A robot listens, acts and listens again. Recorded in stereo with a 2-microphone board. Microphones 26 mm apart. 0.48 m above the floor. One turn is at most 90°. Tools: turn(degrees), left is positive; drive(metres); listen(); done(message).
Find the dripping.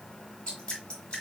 turn(degrees=40)
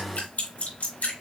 turn(degrees=90)
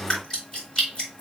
turn(degrees=25)
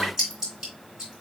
turn(degrees=-20)
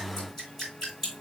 done("Facing the dripping, 2 to 4 m away.")